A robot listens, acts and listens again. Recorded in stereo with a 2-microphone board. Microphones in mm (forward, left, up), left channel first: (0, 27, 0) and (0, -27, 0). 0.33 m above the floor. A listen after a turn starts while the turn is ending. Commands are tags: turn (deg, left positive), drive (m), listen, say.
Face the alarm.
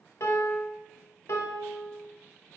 <listen/>
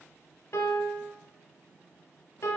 <listen/>
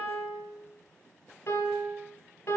<say>I can't make out an alarm, only a piano.</say>